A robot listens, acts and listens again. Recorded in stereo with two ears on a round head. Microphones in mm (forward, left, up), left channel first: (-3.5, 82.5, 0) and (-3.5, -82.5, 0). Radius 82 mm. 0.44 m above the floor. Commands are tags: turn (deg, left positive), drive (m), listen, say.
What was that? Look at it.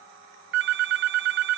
<turn deg="-60"/>
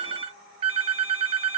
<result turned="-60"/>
<turn deg="-35"/>
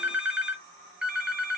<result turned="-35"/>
<say>Facing the phone ringing, under 1 m away.</say>